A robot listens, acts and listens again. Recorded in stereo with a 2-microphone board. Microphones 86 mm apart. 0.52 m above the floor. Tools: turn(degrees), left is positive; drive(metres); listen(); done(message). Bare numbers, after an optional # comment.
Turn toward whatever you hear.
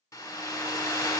# The hair dryer: about 40° left or 140° left.
turn(40)
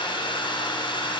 # So it is at 100° left.
turn(100)
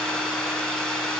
done("Facing the hair dryer.")